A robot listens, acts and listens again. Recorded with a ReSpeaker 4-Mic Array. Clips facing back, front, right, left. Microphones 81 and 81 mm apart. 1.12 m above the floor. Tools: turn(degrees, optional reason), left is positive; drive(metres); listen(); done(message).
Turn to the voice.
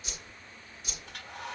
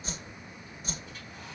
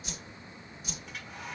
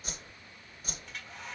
listen()
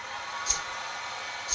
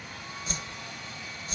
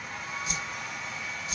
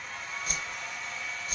listen()
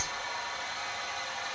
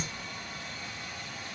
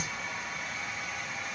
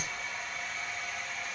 done("I can't make out anyone speaking, only a whoosh and a hair dryer.")